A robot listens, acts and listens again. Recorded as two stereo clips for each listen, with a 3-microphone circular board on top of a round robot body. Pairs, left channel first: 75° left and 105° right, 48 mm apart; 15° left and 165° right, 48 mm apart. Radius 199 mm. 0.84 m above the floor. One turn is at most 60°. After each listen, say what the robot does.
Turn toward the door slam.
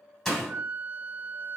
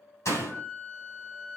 Turn 10° right.
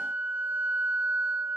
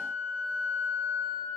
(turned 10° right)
Facing where the door slam came from. I can't hear it now.